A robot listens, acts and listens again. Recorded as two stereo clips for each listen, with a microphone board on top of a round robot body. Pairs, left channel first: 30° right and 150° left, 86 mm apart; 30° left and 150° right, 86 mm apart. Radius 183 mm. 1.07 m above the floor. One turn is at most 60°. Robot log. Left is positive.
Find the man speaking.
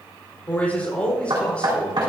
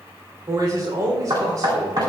note: The man speaking: 105° right.
cmd yaw -60
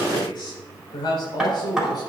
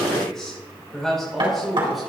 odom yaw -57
note: The man speaking is now 60° right.
cmd yaw -60
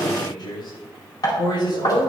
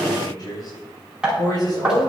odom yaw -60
note: The man speaking is now 10° right.
cmd yaw -10
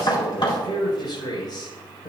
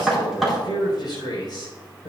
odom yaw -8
end: Facing the man speaking.